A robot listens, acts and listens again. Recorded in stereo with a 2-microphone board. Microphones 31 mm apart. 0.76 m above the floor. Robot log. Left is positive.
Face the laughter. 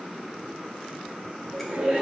note: The laughter: about 50° right or 130° right.
cmd yaw -50
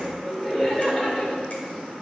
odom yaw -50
note: So it is at 15° left.
cmd yaw +15
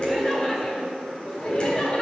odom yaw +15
note: The laughter is now 30° left.
cmd yaw +30
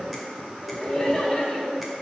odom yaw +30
end: Facing the laughter, 2 to 4 m away.